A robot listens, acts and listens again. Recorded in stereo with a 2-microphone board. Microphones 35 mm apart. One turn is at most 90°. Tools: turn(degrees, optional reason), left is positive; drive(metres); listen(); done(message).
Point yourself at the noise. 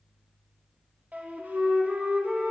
turn(degrees=-55, reason="The flute: about 55° right or 125° right.")
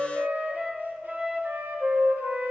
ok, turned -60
turn(degrees=-65, reason="So it is at 65° right.")
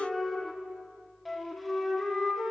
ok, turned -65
done("Facing the flute.")